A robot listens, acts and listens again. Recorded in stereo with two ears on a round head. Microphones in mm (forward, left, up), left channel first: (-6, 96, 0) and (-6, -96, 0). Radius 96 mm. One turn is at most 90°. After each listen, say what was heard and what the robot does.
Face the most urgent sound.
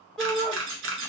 Turn 30° left.
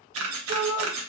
So it is at 30° right. Turn 30° right.
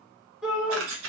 Facing the shout.